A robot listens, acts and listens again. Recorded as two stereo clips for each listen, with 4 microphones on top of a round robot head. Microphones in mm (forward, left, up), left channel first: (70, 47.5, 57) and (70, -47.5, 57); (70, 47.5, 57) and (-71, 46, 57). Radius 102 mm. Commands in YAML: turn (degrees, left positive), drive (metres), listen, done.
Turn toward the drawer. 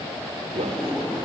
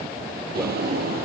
turn: 175
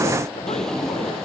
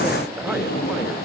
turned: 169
done: "Facing the drawer."